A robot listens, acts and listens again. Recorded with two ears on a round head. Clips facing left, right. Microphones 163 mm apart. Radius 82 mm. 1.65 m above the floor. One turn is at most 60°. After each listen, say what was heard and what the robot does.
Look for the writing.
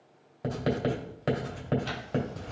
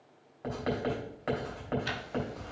The writing: about 40° left or 140° left. Turn 40° left.
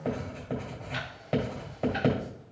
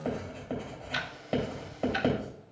Found it: writing, straight ahead, 2 to 4 m away.